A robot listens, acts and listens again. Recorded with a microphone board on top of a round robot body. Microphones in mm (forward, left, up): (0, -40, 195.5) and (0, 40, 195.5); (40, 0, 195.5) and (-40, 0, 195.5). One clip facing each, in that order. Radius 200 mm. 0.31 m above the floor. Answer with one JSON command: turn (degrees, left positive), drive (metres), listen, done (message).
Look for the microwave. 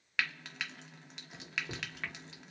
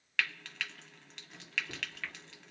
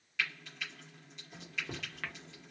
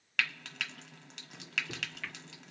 {"turn": -35}
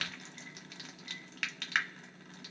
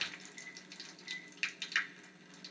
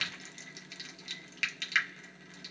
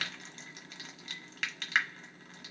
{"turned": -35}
{"listen": true}
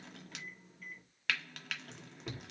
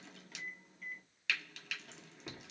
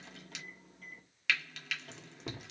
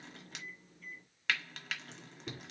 {"done": "Facing the microwave."}